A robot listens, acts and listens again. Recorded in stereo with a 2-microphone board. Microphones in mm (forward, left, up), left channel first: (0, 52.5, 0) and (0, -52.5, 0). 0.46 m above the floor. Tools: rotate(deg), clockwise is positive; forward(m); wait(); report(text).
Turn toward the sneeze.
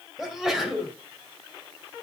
rotate(30)
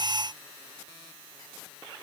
wait()
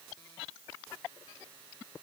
report("I heard a sneeze, but can't make it out now. It was about 25° left or 145° right.")